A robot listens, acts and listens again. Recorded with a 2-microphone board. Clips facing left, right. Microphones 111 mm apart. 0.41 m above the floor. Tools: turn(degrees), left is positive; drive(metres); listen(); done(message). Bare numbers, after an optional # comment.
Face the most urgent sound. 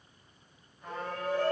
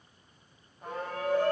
# The shout: about 60° right or 120° right.
turn(-60)
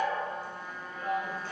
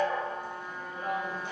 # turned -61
# So it is at 25° right.
turn(-25)
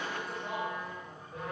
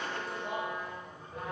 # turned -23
done("Facing the shout, 1 to 2 m away.")